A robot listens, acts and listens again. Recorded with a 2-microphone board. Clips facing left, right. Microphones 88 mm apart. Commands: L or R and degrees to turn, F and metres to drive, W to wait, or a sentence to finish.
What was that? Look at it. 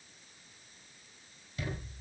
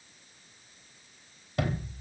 R65
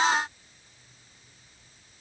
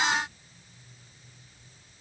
W
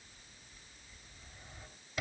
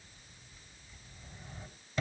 Facing the sliding door.